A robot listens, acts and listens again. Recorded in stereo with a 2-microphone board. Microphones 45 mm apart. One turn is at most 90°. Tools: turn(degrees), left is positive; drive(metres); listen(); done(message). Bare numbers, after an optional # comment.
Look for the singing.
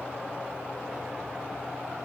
listen()
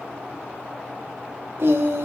# The singing: about 65° right or 115° right.
turn(-65)
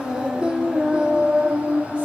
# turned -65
# So it is at 25° right.
turn(-25)
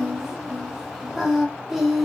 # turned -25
done("Facing the singing.")